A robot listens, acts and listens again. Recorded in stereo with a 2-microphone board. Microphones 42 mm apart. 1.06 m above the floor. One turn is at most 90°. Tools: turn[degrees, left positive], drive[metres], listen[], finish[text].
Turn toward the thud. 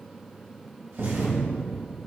Thought: The thud: about 70° right or 110° right.
Action: turn[-70]
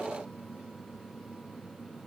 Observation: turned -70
Action: listen[]
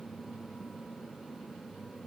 Action: finish[I heard a thud, but can't make it out now. It was about straight ahead or 40° right.]